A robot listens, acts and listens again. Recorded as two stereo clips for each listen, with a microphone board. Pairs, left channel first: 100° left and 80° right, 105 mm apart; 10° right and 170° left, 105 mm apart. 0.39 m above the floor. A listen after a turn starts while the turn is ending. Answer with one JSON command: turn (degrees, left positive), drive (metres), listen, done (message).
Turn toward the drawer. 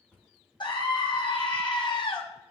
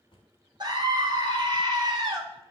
{"turn": 25}
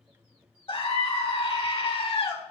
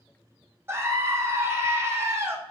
{"listen": true}
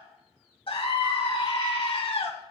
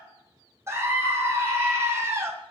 {"listen": true}
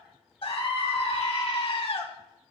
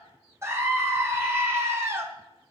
{"done": "Facing where the drawer came from. I can't hear it now."}